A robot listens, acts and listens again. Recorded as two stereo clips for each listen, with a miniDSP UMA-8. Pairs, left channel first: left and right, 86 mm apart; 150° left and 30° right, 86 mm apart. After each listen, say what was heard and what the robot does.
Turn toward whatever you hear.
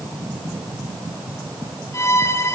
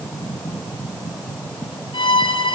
The violin: 145° left. Turn 145° left.
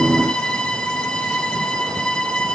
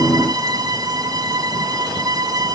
The violin is now 10° left. Turn 10° left.
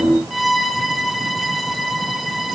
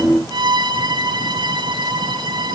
Facing the violin.